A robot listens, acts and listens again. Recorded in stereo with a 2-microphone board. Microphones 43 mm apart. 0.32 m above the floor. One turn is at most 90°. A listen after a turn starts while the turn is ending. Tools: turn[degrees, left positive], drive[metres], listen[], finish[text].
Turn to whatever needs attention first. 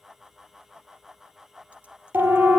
Thought: The siren: about 65° right or 115° right.
Action: turn[-65]
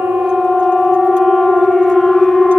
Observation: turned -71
Action: finish[Found it: a siren, straight ahead, over 4 m away.]